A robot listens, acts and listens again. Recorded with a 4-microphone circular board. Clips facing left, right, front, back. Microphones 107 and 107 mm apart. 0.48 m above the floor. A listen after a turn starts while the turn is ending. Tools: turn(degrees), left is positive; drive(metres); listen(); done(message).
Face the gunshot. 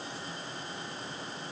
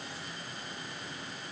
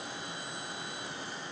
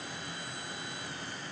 listen()
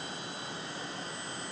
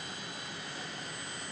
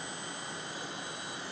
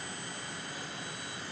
listen()
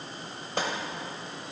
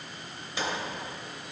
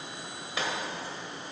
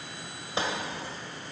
turn(degrees=125)
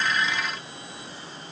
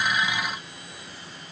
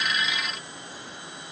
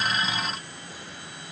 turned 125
done("Facing where the gunshot came from. I can't hear it now.")